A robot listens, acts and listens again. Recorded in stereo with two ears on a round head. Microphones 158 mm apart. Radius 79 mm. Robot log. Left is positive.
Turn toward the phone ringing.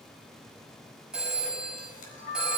cmd yaw -30
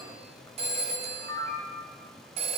note: So it is at 145° right.
cmd yaw -145
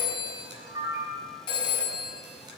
note: The phone ringing is now 30° left.
cmd yaw +30
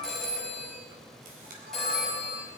end: Found it: a phone ringing, straight ahead, over 4 m away.